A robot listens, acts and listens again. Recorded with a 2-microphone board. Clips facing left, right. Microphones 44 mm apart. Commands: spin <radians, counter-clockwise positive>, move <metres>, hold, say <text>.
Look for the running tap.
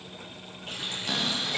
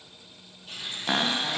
spin 1.13
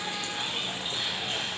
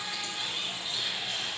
spin 0.87
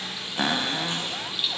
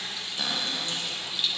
spin 0.17
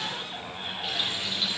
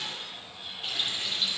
say Facing the running tap, over 4 m away.